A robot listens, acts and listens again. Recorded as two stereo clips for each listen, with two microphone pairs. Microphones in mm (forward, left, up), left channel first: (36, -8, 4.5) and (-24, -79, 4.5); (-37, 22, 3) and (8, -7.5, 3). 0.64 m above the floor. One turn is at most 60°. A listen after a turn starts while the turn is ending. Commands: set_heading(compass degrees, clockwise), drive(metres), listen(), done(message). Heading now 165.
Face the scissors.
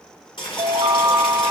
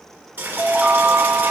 listen()
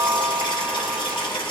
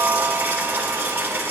listen()
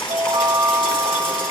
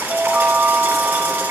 done("I can't make out scissors, only a chime and boiling.")